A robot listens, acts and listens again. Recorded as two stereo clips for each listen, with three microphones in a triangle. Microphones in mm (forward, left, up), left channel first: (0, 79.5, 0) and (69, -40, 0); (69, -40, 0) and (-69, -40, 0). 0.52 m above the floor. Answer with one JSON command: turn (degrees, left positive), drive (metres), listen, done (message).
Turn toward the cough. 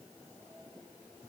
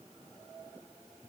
{"listen": true}
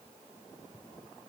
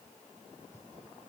{"listen": true}
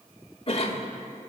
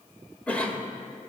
{"turn": 80}
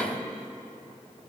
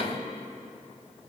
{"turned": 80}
{"turn": 35}
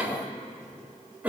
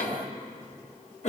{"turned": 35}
{"turn": 15}
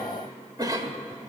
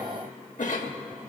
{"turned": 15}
{"done": "Facing the cough."}